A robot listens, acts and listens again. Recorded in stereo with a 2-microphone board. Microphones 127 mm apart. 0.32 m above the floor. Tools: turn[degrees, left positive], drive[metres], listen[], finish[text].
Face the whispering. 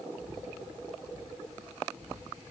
Action: turn[30]
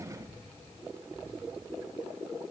Thought: So it is at 150° left.
Action: turn[150]
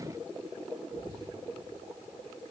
Action: listen[]
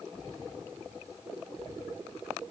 Action: listen[]
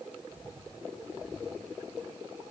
Thought: The whispering is now 40° left.
Action: turn[40]
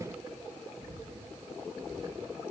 Action: finish[Facing the whispering, 2 to 4 m away.]